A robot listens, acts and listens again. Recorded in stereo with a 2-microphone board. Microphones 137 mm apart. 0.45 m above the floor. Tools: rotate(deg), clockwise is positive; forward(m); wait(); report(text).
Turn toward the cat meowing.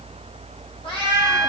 rotate(-40)
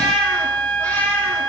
wait()
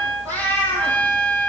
rotate(-15)
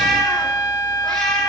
wait()
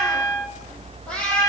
rotate(-10)
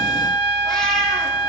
wait()
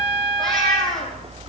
report("Found it: a cat meowing, straight ahead, over 4 m away.")